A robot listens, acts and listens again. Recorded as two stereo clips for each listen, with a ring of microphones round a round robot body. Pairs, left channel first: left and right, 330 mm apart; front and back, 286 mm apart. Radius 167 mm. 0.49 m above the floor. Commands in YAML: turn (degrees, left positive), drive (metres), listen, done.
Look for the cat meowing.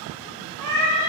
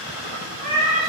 turn: -115
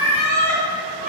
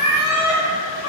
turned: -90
turn: -50
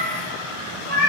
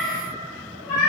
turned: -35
turn: -30
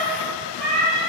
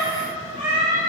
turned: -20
turn: -25
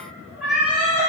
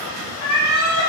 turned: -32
done: "Facing the cat meowing."